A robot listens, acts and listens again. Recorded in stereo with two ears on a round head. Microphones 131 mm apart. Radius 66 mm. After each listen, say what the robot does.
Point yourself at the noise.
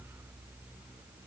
Keep listening.
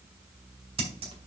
Turn 40° right.
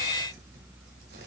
Keep listening.
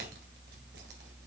Keep listening.
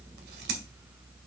Turn 100° right.
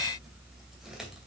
Keep listening.
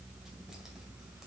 Keep listening.
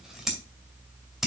Found it: scissors, straight ahead.